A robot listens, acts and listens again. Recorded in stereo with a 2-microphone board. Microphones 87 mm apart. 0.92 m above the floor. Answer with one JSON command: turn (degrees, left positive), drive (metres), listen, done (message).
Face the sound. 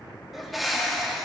{"turn": 30}
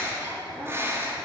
{"turn": -30}
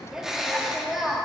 {"done": "Facing the bird."}